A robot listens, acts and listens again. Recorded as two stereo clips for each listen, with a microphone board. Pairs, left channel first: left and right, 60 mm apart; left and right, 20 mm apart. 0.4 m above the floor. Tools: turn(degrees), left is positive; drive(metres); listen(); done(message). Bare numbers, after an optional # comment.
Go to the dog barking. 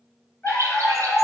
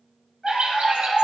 # The dog barking: about 30° left or 150° left.
turn(30)
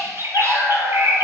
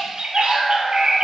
# So it is at 115° left.
turn(115)
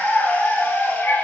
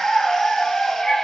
# The dog barking is now 25° left.
turn(25)
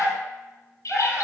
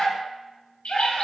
# The dog barking is now 10° right.
turn(-10)
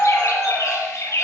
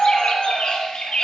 drive(1.0)
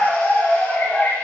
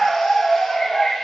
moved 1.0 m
drive(1.0)
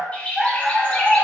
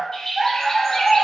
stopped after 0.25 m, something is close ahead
done("Arrived at the dog barking, straight ahead.")